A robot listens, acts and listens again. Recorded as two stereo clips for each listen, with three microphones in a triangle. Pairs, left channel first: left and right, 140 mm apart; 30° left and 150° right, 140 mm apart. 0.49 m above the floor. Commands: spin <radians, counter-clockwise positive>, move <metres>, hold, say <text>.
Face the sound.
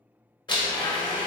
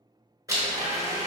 spin 2.62
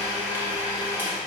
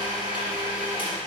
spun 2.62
spin -0.26
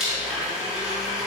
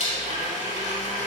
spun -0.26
say Facing the blender.